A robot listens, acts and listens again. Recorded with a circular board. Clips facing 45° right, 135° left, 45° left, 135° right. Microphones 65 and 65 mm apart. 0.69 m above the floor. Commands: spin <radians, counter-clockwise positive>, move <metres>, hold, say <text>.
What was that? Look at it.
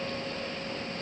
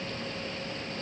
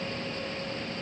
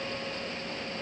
hold
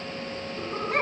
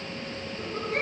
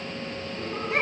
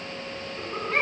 spin -0.52
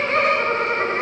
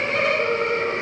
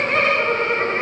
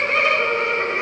say Facing the laughter, over 4 m away.